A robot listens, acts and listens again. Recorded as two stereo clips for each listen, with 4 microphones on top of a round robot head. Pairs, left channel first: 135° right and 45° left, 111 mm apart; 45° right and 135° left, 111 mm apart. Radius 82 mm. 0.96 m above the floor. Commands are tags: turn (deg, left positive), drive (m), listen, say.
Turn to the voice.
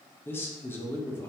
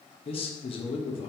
<turn deg="-65"/>
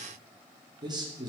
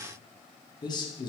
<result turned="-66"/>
<say>Facing the man speaking, 1 to 2 m away.</say>